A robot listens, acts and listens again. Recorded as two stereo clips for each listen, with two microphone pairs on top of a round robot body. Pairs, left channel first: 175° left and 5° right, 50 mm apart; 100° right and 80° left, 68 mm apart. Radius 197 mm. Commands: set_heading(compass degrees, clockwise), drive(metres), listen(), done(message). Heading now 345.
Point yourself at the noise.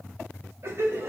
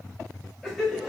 done("Found it: laughter, straight ahead.")